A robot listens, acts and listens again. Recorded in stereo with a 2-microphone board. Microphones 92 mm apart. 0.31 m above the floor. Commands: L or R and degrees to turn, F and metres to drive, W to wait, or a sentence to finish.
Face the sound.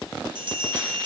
R60
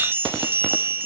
R30
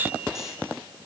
W
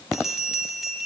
Found it: a bell, straight ahead, 1 to 2 m away.